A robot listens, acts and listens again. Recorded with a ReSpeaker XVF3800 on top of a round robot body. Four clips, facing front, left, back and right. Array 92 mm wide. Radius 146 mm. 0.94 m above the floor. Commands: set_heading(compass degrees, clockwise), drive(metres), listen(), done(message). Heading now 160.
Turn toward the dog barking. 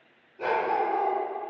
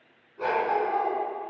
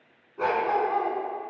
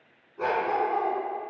set_heading(325)
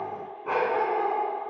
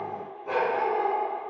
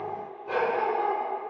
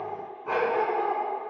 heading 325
set_heading(350)
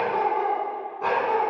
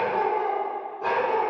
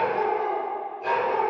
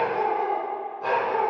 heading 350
done("Found it: a dog barking, straight ahead, 2 to 4 m away.")